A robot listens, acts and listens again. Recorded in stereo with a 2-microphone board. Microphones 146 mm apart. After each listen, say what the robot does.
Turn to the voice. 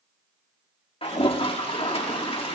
Keep listening.
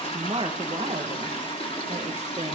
Turn 45° right.
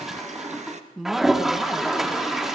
Facing the woman speaking.